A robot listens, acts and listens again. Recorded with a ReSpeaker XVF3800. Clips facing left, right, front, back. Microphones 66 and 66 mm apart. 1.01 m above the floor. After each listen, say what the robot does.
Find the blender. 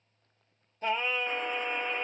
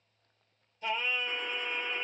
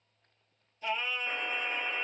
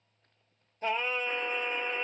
Keep listening.
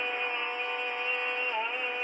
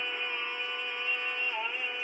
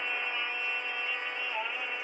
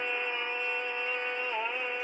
Keep listening.
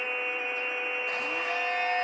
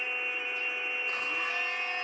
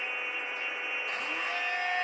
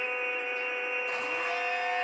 Turn 95° left.
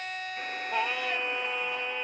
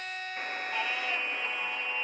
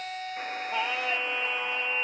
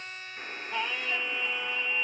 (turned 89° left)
Found it: a blender, straight ahead, 2 to 4 m away.